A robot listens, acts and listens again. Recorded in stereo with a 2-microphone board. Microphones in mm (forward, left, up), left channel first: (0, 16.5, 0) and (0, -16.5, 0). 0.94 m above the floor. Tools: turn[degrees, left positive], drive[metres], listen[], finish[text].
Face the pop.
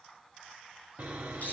Action: listen[]
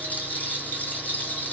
Action: listen[]
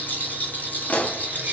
Thought: The pop: about 40° left or 140° left.
Action: turn[40]
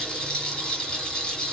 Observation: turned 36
Action: listen[]
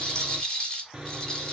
Action: finish[I heard a pop, but can't make it out now. It was about straight ahead or 105° left.]